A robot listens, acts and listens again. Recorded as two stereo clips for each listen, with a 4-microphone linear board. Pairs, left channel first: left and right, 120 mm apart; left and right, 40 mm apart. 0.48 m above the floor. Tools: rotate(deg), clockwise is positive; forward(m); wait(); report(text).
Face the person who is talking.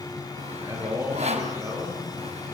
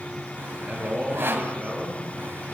rotate(25)
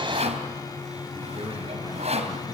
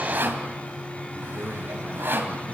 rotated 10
wait()
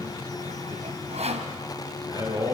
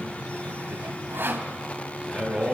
rotate(35)
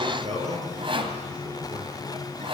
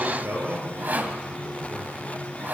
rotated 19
rotate(125)
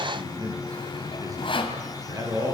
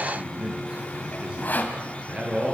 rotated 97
rotate(30)
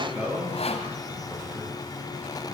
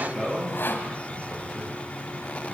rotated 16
rotate(10)
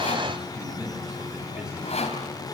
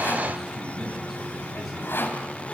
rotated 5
report("Found it: a man speaking, straight ahead.")